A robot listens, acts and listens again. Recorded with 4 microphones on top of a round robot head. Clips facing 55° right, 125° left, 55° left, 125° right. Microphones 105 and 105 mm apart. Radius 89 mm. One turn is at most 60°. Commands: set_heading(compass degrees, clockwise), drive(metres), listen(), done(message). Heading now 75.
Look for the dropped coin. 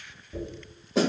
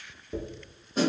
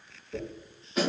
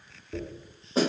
set_heading(15)
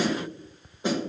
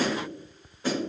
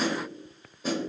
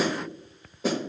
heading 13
set_heading(313)
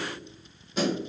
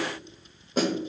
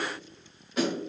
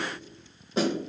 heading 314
set_heading(279)
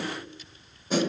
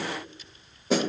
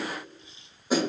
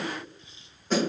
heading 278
done("Facing where the dropped coin came from. I can't hear it now.")